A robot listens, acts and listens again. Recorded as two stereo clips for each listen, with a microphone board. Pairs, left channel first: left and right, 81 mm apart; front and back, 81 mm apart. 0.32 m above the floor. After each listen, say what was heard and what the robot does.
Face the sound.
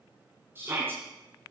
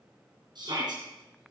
The shout: 150° right. Turn 150° right.
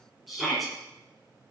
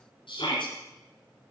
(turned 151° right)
Found it: a shout, straight ahead.